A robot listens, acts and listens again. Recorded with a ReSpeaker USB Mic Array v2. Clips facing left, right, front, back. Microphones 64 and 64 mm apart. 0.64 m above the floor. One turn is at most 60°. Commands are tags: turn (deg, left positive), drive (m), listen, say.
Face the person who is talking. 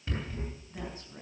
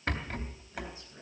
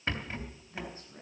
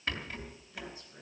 <turn deg="50"/>
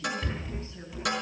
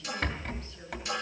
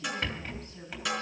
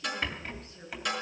<listen/>
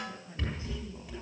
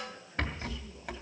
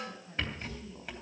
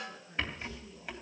<turn deg="30"/>
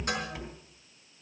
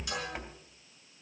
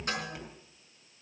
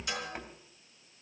<listen/>
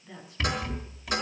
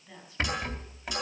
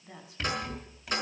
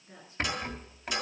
<say>Found it: a woman speaking, straight ahead, over 4 m away.</say>